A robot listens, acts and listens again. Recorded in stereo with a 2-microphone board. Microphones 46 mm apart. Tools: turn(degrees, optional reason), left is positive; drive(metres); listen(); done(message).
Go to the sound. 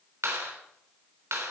turn(degrees=-90)
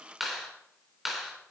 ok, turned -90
drive(metres=1.0)
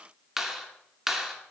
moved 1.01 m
turn(degrees=-10, reason="The clap is now 10° right.")
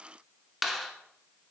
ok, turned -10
drive(metres=1.0)
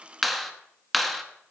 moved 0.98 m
drive(metres=1.0)
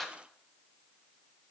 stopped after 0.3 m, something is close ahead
done("Arrived at the clap, straight ahead.")